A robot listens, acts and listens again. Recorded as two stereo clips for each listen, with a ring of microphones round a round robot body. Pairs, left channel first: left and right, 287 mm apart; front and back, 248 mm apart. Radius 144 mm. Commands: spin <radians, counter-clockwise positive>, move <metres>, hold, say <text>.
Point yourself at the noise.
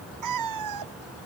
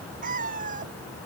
spin -2.01
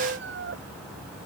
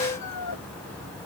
spin -0.61
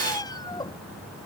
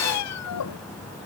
spin 0.26
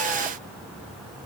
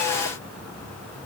hold
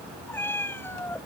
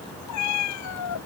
say Found it: a cat meowing, straight ahead.